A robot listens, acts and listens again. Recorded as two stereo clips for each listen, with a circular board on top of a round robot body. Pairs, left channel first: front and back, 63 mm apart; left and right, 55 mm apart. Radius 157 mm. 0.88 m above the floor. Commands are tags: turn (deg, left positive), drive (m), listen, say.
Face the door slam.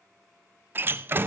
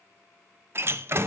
<turn deg="-125"/>
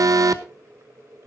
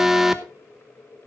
<say>Facing where the door slam came from. I can't hear it now.</say>